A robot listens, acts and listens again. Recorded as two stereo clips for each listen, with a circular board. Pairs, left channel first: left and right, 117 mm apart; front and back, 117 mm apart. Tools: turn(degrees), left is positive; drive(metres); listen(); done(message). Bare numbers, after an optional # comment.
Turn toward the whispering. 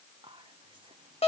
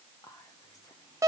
# The whispering: 55° right.
turn(-55)
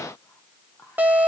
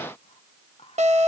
# The whispering is now 25° left.
turn(25)
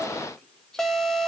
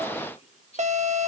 done("Found it: whispering, straight ahead, 1 to 2 m away.")